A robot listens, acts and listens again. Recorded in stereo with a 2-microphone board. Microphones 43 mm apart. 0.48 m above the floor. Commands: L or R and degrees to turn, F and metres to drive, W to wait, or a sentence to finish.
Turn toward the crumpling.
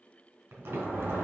R70
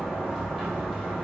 W
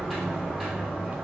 W
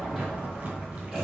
I heard crumpling, but can't make it out now. It was about straight ahead or 40° right.